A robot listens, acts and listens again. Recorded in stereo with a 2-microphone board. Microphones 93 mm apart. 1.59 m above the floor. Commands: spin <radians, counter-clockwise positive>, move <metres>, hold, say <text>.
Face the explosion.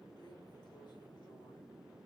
hold
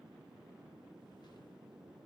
hold
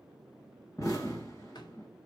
spin 0.79
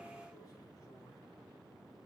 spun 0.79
hold
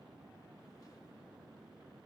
say I heard an explosion, but can't make it out now. It was about straight ahead or 90° left.